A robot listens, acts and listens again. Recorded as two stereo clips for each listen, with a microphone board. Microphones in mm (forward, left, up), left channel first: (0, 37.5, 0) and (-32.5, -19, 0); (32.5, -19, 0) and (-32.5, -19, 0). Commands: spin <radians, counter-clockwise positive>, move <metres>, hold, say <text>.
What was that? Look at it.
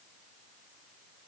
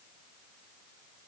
hold
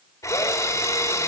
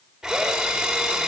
spin 1.66
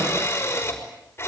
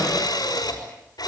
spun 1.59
say Found it: a drill, straight ahead, over 4 m away.